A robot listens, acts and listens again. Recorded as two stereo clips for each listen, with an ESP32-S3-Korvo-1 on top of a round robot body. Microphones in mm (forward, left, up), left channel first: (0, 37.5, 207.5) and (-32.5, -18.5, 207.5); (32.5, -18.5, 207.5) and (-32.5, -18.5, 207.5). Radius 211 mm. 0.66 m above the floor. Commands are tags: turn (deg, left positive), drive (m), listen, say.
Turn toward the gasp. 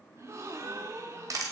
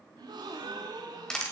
<turn deg="-170"/>
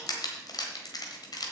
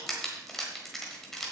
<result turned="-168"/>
<say>Facing where the gasp came from. I can't hear it now.</say>